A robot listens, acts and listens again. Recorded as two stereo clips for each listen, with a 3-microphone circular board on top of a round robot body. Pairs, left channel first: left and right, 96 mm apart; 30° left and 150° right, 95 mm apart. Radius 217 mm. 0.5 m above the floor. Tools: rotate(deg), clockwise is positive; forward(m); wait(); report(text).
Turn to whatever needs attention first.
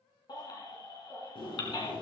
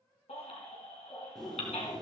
rotate(-45)
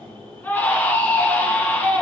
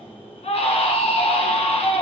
rotate(-20)
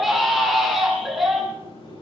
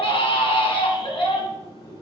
report("Facing the baby crying, 2 to 4 m away.")